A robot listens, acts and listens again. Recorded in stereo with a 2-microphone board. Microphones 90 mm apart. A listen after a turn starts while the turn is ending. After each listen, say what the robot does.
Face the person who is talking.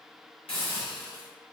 Keep listening.
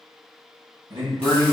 Turn 55° right.
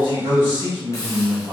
Turn 60° right.
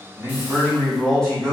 Facing the man speaking.